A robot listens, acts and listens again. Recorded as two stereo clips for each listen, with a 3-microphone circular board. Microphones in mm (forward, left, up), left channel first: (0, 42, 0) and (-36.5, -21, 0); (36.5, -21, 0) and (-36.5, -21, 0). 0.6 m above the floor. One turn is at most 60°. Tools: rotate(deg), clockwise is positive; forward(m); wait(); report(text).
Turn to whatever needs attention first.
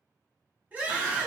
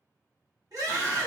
rotate(-60)
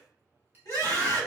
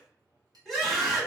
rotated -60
rotate(-60)
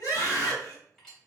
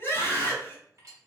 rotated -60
rotate(-60)
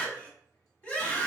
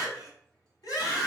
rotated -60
report("Facing the scream, 1 to 2 m away.")